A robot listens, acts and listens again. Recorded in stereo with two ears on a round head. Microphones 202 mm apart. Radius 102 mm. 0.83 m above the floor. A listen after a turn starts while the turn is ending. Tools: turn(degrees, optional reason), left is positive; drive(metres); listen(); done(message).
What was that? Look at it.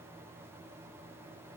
listen()
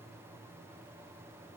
listen()
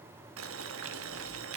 turn(degrees=-65, reason="The boiling: about 65° right or 115° right.")
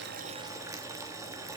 turn(degrees=-15, reason="So it is at 15° right.")
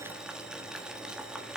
done("Facing the boiling.")